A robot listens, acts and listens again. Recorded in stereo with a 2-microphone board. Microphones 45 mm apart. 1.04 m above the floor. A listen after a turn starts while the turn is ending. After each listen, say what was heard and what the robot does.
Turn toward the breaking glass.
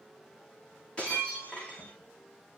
The breaking glass: about 25° left or 155° left. Turn 25° left.
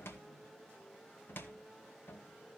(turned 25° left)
Keep listening.
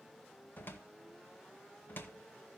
I heard breaking glass, but can't make it out now. It was about straight ahead or 130° left.